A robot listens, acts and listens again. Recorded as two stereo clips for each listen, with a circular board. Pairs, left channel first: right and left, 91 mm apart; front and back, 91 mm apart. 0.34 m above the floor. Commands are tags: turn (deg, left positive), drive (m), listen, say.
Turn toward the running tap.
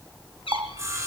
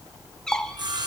<turn deg="65"/>
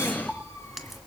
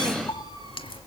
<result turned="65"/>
<say>Facing the running tap, 1 to 2 m away.</say>